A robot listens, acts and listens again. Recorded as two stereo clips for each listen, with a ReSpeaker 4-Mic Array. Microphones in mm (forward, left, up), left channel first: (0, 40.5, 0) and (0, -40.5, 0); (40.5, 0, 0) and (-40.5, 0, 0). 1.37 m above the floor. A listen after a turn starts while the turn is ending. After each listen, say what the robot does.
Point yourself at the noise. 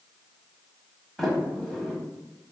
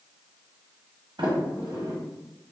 Turn 175° left.
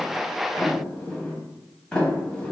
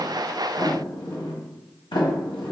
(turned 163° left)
Turn 15° left.
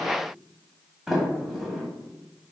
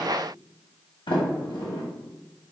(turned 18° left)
Found it: a sliding door, straight ahead.